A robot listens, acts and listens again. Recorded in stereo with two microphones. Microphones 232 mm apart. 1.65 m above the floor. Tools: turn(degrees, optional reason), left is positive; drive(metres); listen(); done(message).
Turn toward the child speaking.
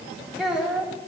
turn(degrees=-30)
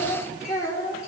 turn(degrees=10, reason="So it is at 10° left.")
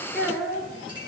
done("Found it: a child speaking, straight ahead, 2 to 4 m away.")